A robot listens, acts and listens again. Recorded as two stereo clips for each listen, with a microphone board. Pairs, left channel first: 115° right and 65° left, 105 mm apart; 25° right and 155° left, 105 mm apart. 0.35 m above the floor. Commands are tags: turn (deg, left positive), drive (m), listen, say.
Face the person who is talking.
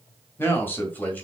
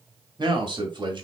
<turn deg="180"/>
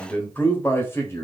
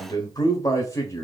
<turn deg="-65"/>
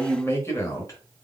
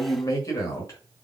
<turn deg="-70"/>
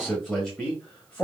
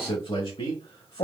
<turn deg="-35"/>
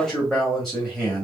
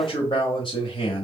<turn deg="-25"/>
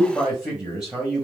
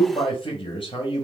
<turn deg="-15"/>
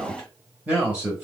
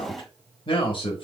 <say>Found it: a man speaking, straight ahead.</say>